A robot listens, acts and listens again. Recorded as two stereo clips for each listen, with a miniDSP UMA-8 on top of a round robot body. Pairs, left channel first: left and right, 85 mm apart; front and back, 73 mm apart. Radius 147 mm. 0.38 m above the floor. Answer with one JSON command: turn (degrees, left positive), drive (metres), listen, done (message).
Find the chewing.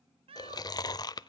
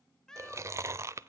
{"turn": 130}
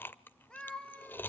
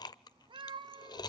{"turn": 25}
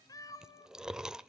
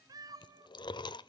{"done": "Found it: chewing, straight ahead."}